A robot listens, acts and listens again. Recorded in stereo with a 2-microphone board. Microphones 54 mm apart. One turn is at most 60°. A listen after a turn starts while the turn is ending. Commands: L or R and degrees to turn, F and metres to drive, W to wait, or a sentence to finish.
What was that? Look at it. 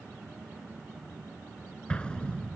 L15
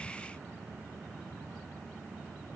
W
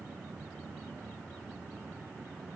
I heard an explosion, but can't make it out now. It was about straight ahead or 150° left.